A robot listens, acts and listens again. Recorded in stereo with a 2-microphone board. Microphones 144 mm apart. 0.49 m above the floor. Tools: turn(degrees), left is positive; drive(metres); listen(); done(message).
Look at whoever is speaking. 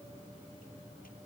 listen()
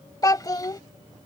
turn(degrees=25)
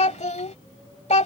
turn(degrees=130)
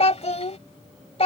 turn(degrees=45)
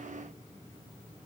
listen()
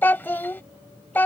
turn(degrees=15)
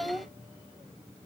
done("Found it: a child speaking, straight ahead.")